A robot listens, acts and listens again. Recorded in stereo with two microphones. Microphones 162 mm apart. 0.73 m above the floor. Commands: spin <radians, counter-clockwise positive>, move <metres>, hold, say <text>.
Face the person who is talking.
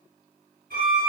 hold
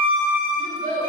spin -1.22
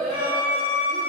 say Facing the child speaking, 2 to 4 m away.